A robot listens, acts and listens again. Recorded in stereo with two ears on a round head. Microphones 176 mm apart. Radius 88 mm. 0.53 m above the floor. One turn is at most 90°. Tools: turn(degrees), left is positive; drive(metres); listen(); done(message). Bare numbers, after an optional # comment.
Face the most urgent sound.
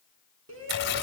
turn(-90)
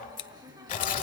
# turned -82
# Nothing new. It was at 10° right.
turn(-10)
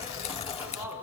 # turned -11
# The shout is now 10° right.
turn(-10)
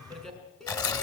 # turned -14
done("Found it: a shout, straight ahead, over 4 m away.")